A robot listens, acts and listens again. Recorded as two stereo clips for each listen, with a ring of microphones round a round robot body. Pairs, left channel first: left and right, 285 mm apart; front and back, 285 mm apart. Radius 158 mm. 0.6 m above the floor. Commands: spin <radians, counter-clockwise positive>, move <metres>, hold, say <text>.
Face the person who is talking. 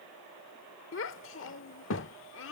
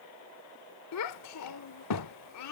spin 0.70
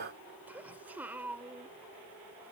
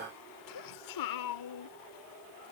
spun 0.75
say Found it: a child speaking, straight ahead.